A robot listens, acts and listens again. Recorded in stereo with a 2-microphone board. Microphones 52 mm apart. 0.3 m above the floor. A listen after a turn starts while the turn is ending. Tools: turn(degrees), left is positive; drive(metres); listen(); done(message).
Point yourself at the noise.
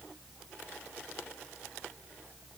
listen()
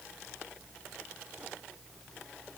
listen()
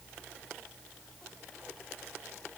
done("I can't make out anything.")